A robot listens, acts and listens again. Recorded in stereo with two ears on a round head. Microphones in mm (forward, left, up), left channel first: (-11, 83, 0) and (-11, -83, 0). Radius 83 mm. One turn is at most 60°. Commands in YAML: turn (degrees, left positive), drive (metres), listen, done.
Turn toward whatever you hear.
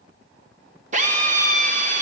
turn: -40
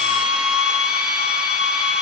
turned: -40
done: "Facing the drill, 1 to 2 m away."